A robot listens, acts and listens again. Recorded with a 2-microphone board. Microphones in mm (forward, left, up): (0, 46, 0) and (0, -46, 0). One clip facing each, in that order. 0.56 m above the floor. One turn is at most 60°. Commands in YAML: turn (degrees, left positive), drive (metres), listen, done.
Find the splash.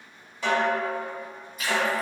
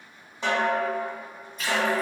turn: 30
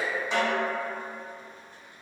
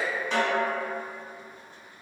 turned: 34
listen: true
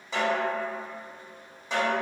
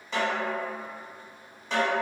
done: "I heard a splash, but can't make it out now. It was about 25° right or 140° left."